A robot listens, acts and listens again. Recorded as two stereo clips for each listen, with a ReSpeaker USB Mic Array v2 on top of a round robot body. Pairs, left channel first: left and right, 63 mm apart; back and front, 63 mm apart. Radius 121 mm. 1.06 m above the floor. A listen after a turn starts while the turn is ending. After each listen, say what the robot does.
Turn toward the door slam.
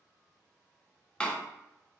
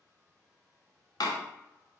Turn 165° left.
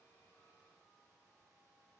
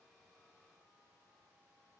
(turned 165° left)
Facing where the door slam came from. I can't hear it now.